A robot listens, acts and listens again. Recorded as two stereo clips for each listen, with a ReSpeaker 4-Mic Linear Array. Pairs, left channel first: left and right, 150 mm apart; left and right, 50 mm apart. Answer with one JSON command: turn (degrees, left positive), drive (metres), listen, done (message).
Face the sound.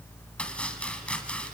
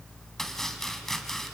{"turn": 30}
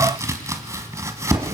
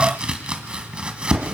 {"turn": -20}
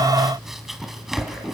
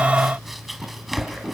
{"done": "Facing the chopping, 1 to 2 m away."}